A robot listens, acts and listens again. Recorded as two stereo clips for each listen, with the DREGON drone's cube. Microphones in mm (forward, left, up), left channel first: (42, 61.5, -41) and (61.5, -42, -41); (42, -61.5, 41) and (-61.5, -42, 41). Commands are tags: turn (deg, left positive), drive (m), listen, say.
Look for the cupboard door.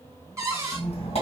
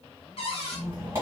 <turn deg="-20"/>
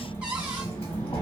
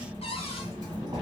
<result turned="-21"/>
<listen/>
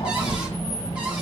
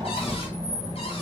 <listen/>
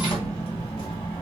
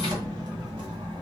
<say>Facing where the cupboard door came from. I can't hear it now.</say>